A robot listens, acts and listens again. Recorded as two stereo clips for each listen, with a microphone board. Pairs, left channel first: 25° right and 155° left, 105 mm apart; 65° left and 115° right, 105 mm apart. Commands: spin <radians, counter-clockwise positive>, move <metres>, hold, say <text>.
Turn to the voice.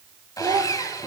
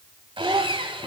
spin -2.79
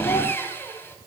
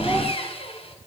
hold
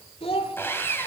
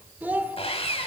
spin -0.70
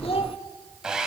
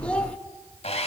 hold
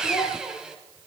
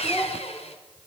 spin -0.17
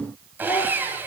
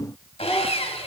hold
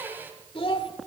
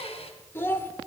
say Facing the child speaking.